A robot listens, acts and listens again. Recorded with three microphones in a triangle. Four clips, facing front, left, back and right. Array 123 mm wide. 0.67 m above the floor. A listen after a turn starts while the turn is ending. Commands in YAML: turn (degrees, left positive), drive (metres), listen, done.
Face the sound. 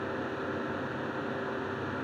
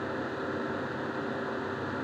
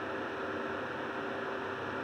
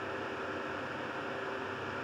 listen: true
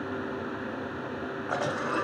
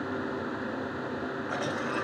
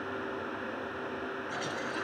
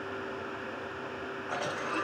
done: "Facing the cough, 1 to 2 m away."